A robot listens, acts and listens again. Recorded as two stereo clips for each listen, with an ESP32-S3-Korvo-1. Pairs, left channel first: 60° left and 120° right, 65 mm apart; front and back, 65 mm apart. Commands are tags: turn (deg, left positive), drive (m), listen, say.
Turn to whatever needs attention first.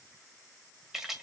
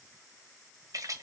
<listen/>
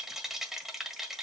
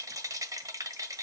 <listen/>
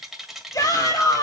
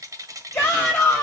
<turn deg="65"/>
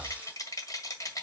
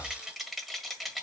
<listen/>
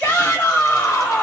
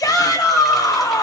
<say>Found it: a shout, straight ahead.</say>